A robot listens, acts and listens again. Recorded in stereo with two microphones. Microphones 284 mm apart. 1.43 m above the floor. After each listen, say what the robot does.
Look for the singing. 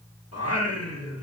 Turn 55° left.
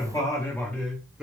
Facing the singing.